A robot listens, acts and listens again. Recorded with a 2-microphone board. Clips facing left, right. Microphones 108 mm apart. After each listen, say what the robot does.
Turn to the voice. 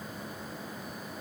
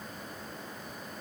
Keep listening.
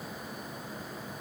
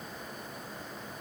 Keep listening.
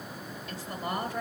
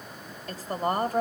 Turn 50° right.
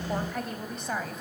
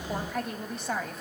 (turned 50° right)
Found it: a woman speaking, straight ahead.